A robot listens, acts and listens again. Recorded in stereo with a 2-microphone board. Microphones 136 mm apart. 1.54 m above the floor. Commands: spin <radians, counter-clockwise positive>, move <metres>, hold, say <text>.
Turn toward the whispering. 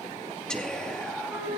spin 0.52
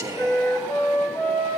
spin -0.44
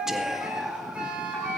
say Found it: whispering, straight ahead, 1 to 2 m away.